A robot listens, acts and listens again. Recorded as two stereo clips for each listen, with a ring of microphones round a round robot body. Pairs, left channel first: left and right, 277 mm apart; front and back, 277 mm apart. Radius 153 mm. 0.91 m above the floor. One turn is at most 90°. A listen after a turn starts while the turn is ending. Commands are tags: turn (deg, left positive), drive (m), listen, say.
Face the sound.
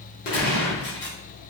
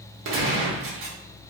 <turn deg="90"/>
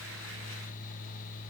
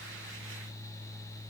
<turn deg="50"/>
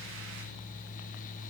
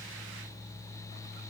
<say>I heard a gunshot from this way, but can't make it out now.</say>